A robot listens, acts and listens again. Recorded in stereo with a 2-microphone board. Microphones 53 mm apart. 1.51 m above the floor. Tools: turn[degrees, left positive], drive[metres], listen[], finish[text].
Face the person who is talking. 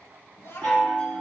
Thought: The child speaking: about 50° left or 130° left.
Action: turn[50]
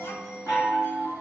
Action: listen[]
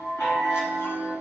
Action: listen[]
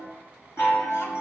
Action: finish[I heard a child speaking, but can't make it out now. It was about straight ahead or 80° left.]